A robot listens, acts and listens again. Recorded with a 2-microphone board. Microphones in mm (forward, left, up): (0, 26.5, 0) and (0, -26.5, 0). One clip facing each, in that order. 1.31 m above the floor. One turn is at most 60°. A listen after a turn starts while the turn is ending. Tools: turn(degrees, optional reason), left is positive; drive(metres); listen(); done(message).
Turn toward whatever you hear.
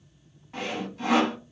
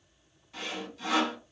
turn(degrees=35, reason="The sawing: about 35° left or 145° left.")
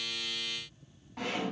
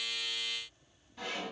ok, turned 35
turn(degrees=60, reason="So it is at 105° left.")
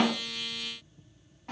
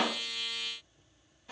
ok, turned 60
turn(degrees=45, reason="Nothing new. It was at 45° left.")
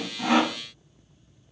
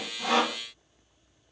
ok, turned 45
turn(degrees=20, reason="The sawing is now 20° left.")
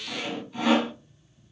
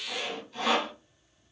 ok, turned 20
turn(degrees=10, reason="The sawing is now 10° left.")
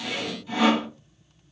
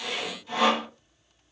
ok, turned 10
done("Facing the sawing.")